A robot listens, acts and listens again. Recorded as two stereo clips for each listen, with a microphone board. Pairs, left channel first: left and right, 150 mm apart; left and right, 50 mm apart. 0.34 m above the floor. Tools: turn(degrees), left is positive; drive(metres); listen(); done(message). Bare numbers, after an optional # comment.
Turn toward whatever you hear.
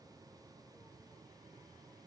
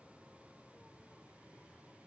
listen()
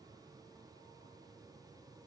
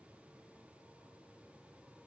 listen()
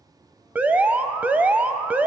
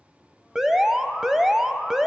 turn(-30)
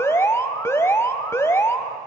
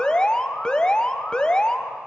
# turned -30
# So it is at 20° left.
turn(20)
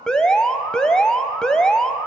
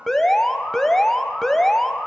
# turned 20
done("Facing the alarm.")